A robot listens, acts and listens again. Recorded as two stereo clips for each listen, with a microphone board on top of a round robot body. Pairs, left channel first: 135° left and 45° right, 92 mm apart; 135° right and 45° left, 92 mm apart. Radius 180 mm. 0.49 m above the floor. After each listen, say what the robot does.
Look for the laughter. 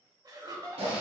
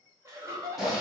Found it: laughter, straight ahead, 1 to 2 m away.